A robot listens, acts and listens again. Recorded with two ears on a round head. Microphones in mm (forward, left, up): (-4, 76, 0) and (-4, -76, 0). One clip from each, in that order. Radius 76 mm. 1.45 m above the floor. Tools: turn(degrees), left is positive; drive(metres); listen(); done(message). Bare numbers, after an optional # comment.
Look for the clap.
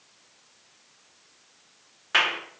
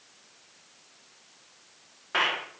# The clap: about 65° left or 115° left.
turn(65)
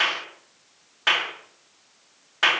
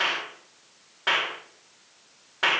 # So it is at 55° left.
turn(55)
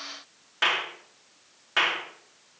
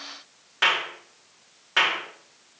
done("Found it: a clap, straight ahead.")